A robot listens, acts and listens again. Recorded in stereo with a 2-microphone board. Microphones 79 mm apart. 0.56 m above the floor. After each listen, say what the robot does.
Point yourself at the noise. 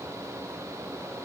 Keep listening.
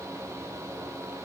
Keep listening.
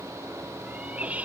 Turn 15° right.
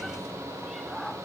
Keep listening.
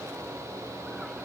Keep listening.
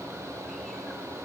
I heard a cat meowing, but can't make it out now. It was about straight ahead or 150° right.